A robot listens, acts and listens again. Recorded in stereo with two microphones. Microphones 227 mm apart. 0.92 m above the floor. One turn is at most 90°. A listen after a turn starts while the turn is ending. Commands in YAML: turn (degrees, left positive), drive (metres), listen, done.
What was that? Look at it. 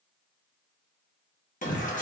turn: 35
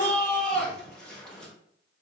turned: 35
done: "Facing the shout."